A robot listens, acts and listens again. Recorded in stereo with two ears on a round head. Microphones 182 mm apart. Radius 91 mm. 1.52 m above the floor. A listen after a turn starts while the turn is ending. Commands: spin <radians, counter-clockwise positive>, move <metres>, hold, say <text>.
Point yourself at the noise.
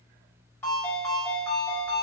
spin 0.52
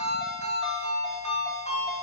spin 2.36
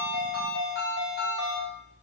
spin 0.79
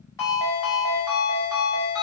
spin 0.35
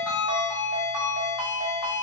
say Found it: a ringtone, straight ahead, 1 to 2 m away.